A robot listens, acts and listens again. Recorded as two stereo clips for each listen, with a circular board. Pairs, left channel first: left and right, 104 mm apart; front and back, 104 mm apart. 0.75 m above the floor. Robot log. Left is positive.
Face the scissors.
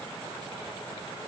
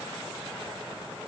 cmd idle
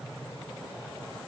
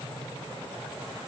cmd idle
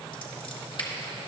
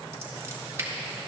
note: The scissors: 120° left.
cmd yaw +120
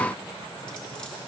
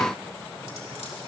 cmd idle
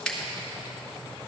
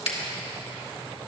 note: The scissors is now 10° left.
cmd yaw +10
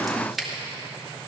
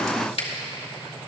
end: Found it: scissors, straight ahead, 1 to 2 m away.